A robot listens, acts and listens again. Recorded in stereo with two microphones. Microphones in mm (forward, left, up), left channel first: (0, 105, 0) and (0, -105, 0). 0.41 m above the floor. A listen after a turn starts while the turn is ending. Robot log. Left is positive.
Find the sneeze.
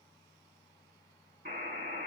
cmd idle
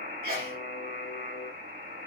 note: The sneeze: about 55° right or 125° right.
cmd yaw -55
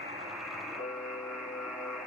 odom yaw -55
cmd idle
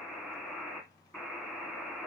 end: I heard a sneeze, but can't make it out now. It was about straight ahead or 70° right.